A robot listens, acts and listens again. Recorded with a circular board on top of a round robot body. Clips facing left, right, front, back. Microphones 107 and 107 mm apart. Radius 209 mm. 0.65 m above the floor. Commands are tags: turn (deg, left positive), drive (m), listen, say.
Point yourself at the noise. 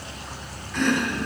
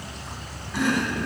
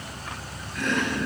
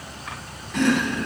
<turn deg="-170"/>
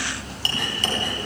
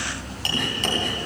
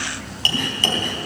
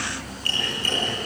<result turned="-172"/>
<say>Facing the chopping, 2 to 4 m away.</say>